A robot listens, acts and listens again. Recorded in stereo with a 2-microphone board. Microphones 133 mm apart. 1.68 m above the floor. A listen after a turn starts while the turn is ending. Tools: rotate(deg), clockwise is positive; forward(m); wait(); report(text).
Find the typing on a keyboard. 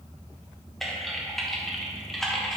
rotate(-30)
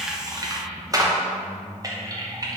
rotate(30)
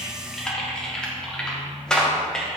report("Facing the typing on a keyboard, under 1 m away.")